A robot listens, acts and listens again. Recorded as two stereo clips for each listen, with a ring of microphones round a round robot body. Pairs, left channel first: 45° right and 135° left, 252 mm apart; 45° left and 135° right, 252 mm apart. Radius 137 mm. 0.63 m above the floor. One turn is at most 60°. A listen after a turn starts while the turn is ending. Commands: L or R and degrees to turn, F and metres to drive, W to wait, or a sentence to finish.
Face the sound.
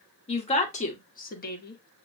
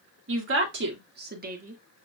R60
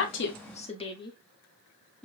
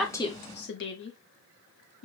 L40
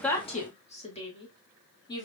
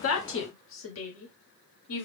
L25
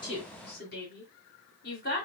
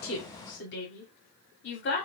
Facing the woman speaking.